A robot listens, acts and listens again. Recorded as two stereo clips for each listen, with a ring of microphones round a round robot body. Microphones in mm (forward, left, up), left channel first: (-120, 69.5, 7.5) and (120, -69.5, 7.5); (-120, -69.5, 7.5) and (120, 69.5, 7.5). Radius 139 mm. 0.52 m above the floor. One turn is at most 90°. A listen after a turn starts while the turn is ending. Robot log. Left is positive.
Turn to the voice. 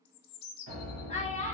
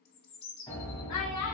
note: The child speaking: 145° right.
cmd yaw -90
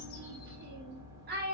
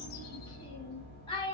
note: The child speaking is now 80° right.
cmd yaw -80
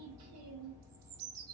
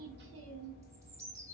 cmd idle
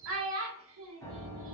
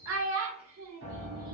end: Found it: a child speaking, straight ahead, 1 to 2 m away.